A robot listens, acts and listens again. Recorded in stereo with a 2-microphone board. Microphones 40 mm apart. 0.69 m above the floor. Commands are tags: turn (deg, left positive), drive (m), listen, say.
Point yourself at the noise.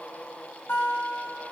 <turn deg="65"/>
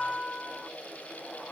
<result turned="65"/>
<say>Facing the guitar, 2 to 4 m away.</say>